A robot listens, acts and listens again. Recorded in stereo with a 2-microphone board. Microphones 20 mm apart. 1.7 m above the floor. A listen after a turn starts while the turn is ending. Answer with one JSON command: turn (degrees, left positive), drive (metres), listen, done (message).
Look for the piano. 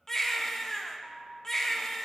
{"turn": -70}
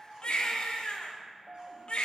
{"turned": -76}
{"turn": -30}
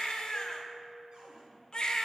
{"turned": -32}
{"done": "Facing the piano."}